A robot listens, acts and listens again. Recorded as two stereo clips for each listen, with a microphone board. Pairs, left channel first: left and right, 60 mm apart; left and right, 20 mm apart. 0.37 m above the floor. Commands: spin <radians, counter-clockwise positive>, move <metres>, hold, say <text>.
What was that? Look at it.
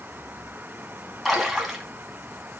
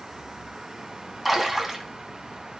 spin 0.52
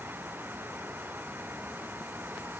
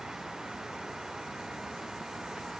hold
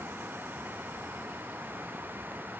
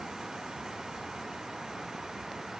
say I heard a splash, but can't make it out now. It was about 30° right or 150° left.